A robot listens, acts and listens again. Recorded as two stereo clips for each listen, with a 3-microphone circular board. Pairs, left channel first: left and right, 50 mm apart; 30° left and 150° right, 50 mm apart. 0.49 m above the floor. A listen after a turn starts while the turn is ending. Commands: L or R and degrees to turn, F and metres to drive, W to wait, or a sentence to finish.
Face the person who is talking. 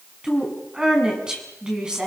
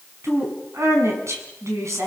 R165
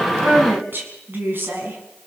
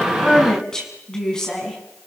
R45
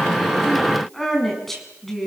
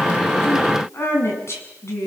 Facing the woman speaking, over 4 m away.